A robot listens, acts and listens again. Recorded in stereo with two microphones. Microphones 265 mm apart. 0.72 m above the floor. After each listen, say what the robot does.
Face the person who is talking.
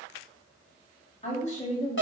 Turn 25° left.
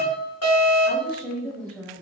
Found it: a woman speaking, straight ahead.